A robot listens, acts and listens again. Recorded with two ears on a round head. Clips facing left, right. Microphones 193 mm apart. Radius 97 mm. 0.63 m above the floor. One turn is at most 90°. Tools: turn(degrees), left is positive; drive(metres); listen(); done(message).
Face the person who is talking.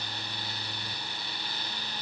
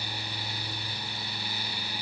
listen()
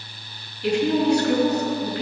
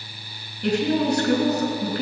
turn(degrees=-45)
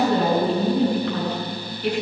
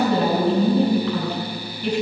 turn(degrees=-85)
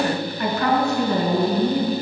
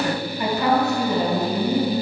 turn(degrees=-15)
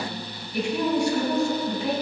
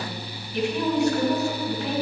done("Facing the woman speaking, 2 to 4 m away.")